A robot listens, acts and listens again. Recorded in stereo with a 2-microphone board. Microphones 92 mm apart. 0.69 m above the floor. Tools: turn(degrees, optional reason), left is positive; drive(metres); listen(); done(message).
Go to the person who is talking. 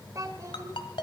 turn(degrees=-40, reason="The child speaking: about 40° right or 140° right.")
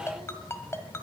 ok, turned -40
listen()
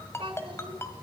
turn(degrees=-100, reason="So it is at 100° right.")
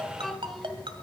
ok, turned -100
drive(metres=1.0)
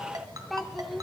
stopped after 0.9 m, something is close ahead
done("I am next to the child speaking.")